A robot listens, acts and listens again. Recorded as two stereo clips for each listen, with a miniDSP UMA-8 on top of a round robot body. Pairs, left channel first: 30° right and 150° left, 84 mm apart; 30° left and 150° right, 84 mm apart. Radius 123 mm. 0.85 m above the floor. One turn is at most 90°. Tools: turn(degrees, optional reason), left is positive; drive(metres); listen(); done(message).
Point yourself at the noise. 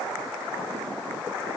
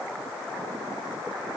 listen()
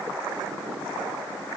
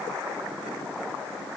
listen()
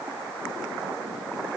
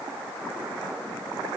done("I can't make out anything to turn to.")